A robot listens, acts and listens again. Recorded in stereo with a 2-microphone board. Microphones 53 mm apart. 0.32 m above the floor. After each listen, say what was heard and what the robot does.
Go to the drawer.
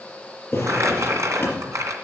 The drawer: about 30° left or 150° left. Turn 30° left.
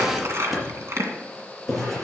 Drive 1.0 m forward.
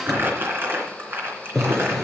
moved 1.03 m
Drive 1.0 m forward.
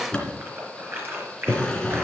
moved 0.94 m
The drawer is now 20° left. Turn 20° left.
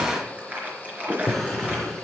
Drive 1.0 m forward.
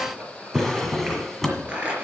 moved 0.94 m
Drive 1.0 m forward.
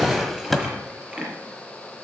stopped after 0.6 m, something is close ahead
Arrived at the drawer, straight ahead.